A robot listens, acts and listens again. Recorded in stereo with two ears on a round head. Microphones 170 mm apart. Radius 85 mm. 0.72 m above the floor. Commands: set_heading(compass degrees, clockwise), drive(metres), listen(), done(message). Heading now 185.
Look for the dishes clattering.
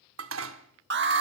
set_heading(275)
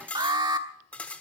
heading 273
set_heading(263)
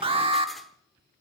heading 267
listen()
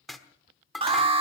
done("Facing the dishes clattering.")